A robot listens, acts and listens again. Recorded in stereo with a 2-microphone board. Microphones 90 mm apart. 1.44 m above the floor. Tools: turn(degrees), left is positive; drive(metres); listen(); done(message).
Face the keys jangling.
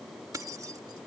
turn(degrees=-40)
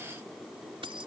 turn(degrees=-100)
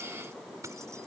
turn(degrees=-35)
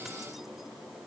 listen()
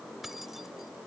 done("Facing the keys jangling.")